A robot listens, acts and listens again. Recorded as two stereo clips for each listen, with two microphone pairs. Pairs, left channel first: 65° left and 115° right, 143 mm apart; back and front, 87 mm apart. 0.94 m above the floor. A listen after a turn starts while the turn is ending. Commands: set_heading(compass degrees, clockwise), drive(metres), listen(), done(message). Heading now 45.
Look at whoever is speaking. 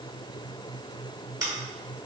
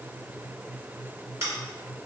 listen()
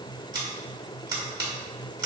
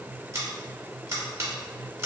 listen()
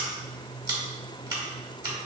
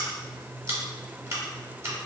done("I can't make out anyone speaking, only scissors.")